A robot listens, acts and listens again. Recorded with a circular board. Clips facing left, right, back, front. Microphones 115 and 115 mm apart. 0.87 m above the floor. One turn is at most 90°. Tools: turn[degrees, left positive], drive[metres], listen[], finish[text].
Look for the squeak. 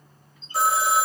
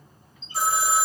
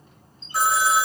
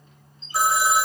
Thought: The squeak: 140° left.
Action: turn[90]
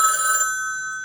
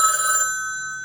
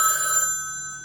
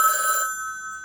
Thought: Nothing new. It was at 50° left.
Action: turn[50]
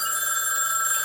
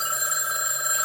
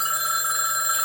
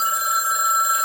Action: listen[]
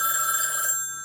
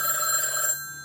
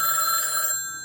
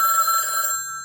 Action: finish[I heard a squeak from this way, but can't make it out now.]